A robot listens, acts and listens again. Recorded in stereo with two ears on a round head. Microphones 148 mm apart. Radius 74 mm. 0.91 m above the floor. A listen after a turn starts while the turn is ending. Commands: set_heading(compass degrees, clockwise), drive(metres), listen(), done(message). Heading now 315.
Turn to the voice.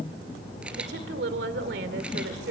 set_heading(25)
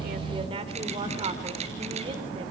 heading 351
set_heading(26)
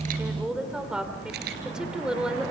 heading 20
done("Facing the woman speaking, 2 to 4 m away.")